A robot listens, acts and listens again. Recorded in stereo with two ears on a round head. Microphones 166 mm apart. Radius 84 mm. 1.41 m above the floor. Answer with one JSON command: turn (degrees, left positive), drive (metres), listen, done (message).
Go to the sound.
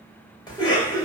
{"turn": 25}
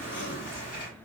{"turn": 130}
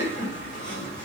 {"turn": 65}
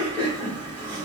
{"turn": 10}
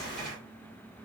{"drive": 1.0}
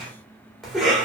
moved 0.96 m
{"drive": 1.0}
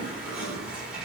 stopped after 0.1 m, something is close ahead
{"done": "Arrived at the cough, straight ahead."}